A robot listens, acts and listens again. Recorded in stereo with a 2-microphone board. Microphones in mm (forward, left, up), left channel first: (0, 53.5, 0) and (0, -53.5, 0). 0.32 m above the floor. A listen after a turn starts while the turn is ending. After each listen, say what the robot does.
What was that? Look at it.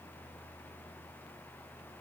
Keep listening.
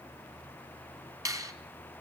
Turn 35° right.
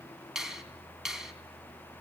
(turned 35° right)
Facing the finger snap.